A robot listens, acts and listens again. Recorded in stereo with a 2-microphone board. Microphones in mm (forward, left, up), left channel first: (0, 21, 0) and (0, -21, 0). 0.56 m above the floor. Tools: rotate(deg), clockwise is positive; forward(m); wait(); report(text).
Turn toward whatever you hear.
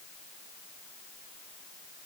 wait()
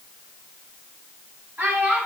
rotate(55)
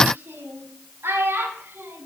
rotate(80)
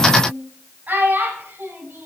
rotate(40)
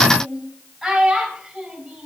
report("Facing the child speaking.")